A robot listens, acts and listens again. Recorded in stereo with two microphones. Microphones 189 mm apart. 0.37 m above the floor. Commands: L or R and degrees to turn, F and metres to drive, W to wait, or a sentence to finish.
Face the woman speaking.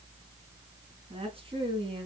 R30
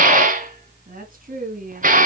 R130
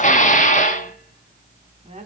R35
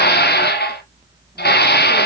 W
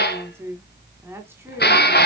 R15
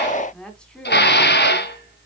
W
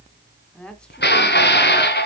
Facing the woman speaking.